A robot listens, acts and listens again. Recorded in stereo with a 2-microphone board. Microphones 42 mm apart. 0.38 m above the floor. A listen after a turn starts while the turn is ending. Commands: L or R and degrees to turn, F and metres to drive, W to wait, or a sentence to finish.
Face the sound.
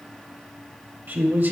R45
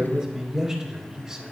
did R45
R15
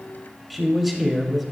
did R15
Facing the man speaking, 1 to 2 m away.